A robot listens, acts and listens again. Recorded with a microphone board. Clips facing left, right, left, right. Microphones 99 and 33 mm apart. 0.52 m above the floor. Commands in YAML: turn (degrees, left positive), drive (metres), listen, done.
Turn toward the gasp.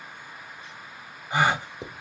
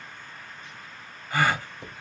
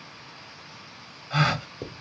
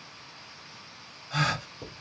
turn: 20
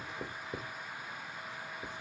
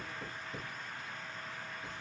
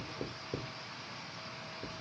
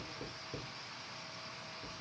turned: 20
listen: true
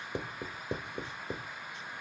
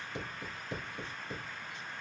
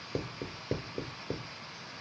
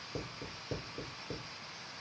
done: "I heard a gasp, but can't make it out now. It was about straight ahead or 140° left."